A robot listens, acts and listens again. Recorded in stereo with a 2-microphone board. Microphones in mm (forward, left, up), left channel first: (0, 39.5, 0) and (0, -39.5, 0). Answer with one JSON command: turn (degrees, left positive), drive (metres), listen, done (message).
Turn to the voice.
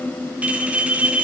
{"listen": true}
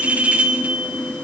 {"listen": true}
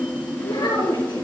{"turn": 70}
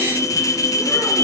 {"listen": true}
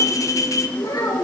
{"turn": 55}
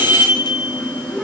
{"listen": true}
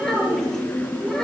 {"done": "Facing the child speaking, over 4 m away."}